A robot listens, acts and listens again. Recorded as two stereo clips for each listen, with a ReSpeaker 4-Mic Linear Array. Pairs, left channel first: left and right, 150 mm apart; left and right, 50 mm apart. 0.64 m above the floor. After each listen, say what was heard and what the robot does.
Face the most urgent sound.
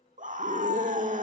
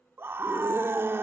The scream: about 55° right or 125° right. Turn 55° right.
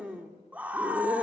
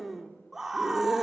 So it is at 10° right. Turn 10° right.
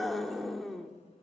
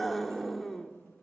Facing the scream, 1 to 2 m away.